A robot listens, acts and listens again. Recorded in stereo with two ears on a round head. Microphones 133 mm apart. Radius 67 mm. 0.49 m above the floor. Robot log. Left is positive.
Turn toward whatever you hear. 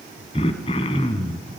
note: The throat clearing: about 40° left or 140° left.
cmd yaw +40
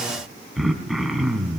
end: Found it: throat clearing, straight ahead.